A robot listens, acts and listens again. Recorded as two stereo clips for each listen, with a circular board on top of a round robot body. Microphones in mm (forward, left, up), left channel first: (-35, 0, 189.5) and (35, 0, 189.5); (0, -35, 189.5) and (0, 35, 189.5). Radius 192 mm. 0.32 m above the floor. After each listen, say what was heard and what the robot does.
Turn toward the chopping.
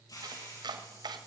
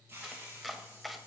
Facing the chopping, 1 to 2 m away.